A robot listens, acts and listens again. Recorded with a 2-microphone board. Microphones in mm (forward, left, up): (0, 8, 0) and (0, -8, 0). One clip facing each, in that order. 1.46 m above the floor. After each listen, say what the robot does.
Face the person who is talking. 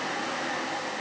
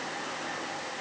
Keep listening.
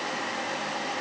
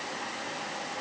Keep listening.
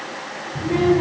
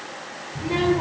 Turn 25° right.
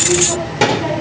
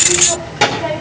Turn 10° right.
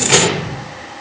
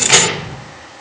Facing the child speaking.